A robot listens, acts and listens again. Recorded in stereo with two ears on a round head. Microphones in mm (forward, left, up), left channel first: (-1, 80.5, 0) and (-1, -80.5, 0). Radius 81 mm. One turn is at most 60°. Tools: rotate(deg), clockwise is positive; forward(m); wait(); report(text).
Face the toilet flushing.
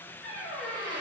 wait()
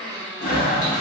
rotate(-45)
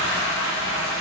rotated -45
rotate(-60)
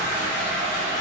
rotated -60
rotate(-40)
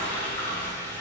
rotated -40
rotate(-10)
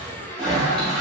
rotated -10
report("Found it: a toilet flushing, straight ahead.")